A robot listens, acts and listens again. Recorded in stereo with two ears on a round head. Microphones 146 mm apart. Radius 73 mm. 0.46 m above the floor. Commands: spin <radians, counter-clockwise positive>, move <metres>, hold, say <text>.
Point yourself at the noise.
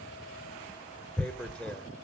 spin 0.52
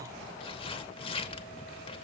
spin 2.44
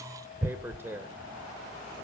spin -0.26
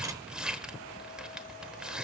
say Found it: tearing paper, straight ahead.